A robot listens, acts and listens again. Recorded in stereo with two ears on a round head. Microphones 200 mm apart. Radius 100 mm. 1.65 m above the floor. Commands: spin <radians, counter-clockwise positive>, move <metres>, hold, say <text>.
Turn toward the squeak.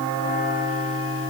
hold
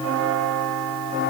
hold
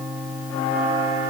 say I can't make out a squeak to turn to.